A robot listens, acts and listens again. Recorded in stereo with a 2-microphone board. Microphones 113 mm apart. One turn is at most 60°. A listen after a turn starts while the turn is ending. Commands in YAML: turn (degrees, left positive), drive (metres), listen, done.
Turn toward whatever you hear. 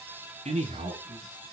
turn: -60
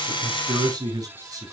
turn: -30
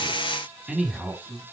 done: "Found it: a man speaking, straight ahead."